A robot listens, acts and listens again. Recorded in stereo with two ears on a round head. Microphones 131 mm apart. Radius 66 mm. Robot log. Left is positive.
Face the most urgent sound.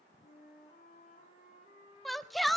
cmd yaw +30
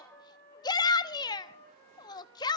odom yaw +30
note: So it is at 150° left.
cmd yaw +150
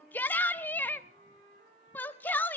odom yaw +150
note: The shout is now 15° left.
cmd yaw +15
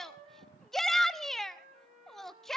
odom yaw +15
end: Facing the shout, 1 to 2 m away.